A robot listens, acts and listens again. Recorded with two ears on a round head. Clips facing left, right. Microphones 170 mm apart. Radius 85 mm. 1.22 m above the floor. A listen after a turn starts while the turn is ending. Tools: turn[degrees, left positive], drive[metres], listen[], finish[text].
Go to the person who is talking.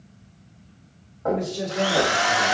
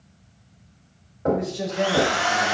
Thought: The man speaking: about 70° left or 110° left.
Action: turn[70]
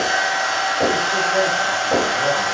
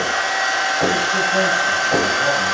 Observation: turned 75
Action: listen[]
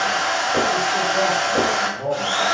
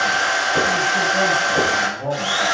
Thought: So it is at 30° left.
Action: turn[30]
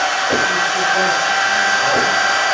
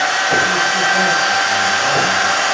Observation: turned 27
Action: listen[]
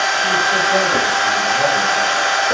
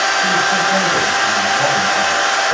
Action: listen[]
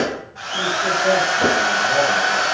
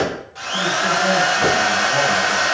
Action: finish[Facing where the man speaking came from. I can't hear it now. I did not reach it.]